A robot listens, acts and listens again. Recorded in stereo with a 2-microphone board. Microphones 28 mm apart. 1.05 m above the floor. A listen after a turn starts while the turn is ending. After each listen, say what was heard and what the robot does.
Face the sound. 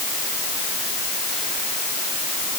Keep listening.
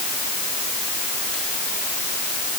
Keep listening.
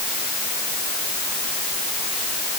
I can't make out anything to turn to.